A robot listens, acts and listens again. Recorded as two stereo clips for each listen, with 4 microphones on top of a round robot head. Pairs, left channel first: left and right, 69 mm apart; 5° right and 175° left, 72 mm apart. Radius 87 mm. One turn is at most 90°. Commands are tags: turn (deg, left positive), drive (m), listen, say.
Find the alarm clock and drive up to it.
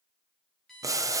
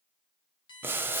<drive m="1.0"/>
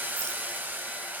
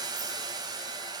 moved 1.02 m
<listen/>
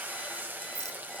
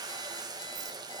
<listen/>
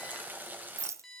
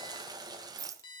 <drive m="1.0"/>
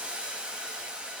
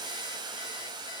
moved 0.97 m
<listen/>
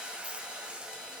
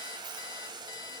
<listen/>
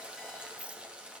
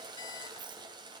<say>Facing where the alarm clock came from. I can't hear it now. I did not reach it.</say>